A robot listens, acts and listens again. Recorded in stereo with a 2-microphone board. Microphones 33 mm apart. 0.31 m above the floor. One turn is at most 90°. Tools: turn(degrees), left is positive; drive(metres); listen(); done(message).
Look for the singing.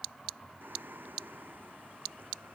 turn(degrees=-90)
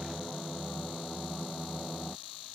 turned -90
done("Facing the singing.")